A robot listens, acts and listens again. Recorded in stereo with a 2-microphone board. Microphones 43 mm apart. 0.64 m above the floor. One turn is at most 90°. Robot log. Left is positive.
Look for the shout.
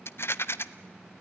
cmd idle
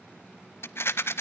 cmd idle
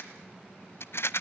end: I can't make out a shout, only a rattle.